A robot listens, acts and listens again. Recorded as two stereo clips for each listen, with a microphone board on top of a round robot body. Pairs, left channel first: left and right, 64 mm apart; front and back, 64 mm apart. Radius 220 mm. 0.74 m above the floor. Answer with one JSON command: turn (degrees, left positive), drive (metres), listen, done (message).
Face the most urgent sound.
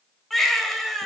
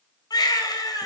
{"done": "Facing the baby crying."}